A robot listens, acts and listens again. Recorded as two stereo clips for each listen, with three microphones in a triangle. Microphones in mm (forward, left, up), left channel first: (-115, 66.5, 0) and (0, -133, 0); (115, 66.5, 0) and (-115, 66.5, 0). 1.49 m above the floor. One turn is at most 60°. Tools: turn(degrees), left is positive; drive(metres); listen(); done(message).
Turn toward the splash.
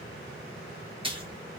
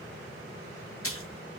done("Found it: a splash, straight ahead, under 1 m away.")